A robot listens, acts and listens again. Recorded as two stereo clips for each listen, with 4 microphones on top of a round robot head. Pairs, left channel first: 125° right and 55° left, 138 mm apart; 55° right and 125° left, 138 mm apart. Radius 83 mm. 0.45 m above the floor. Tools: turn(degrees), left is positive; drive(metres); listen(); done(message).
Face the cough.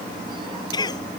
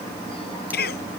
turn(degrees=-60)
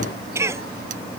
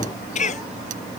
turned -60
turn(degrees=-15)
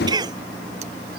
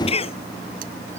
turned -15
done("Found it: a cough, straight ahead.")